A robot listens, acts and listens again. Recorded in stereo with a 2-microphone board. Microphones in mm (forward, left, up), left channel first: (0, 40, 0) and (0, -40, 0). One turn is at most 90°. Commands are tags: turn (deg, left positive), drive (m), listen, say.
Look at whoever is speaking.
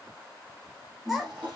<turn deg="30"/>
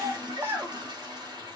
<turn deg="-30"/>
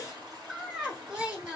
<turn deg="-10"/>
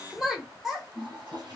<say>Found it: a child speaking, straight ahead.</say>